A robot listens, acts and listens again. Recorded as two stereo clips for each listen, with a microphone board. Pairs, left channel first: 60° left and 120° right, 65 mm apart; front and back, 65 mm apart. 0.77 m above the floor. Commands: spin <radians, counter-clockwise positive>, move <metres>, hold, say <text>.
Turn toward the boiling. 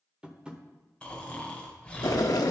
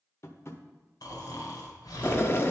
spin 0.87
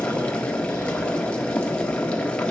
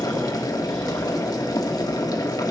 spin -0.17
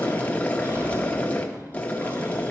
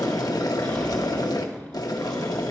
say Found it: boiling, straight ahead, under 1 m away.